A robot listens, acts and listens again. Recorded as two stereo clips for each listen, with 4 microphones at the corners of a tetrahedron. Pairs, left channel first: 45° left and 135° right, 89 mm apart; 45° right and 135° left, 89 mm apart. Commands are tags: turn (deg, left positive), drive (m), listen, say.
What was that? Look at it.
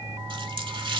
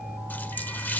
<turn deg="-115"/>
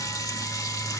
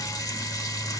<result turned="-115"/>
<say>Found it: a running tap, straight ahead, 1 to 2 m away.</say>